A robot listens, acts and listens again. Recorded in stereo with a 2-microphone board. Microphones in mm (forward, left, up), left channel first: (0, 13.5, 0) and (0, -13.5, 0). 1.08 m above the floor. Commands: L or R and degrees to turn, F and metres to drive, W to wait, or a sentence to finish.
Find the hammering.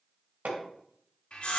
R90
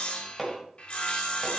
Found it: hammering, straight ahead.